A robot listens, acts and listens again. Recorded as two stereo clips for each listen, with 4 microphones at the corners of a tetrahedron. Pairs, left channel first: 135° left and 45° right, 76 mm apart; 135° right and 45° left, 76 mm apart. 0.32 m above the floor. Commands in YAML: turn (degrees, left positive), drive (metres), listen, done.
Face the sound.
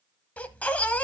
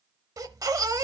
turn: 70
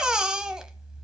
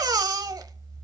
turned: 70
turn: 35
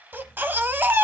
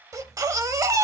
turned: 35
turn: 10
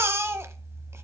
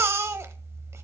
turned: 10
done: "Facing the baby crying, under 1 m away."